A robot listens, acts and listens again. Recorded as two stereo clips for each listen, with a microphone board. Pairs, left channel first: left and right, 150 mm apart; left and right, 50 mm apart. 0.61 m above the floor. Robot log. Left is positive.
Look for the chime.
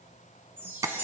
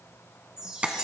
note: The chime: about 15° right or 165° right.
cmd yaw -15
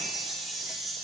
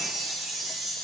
end: Facing the chime, 2 to 4 m away.